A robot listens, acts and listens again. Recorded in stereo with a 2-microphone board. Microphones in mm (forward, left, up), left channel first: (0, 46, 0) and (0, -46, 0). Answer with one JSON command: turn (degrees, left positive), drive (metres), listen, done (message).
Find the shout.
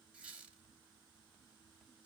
{"listen": true}
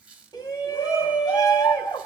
{"turn": 45}
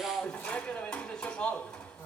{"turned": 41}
{"turn": 10}
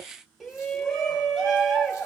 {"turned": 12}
{"done": "Found it: a shout, straight ahead."}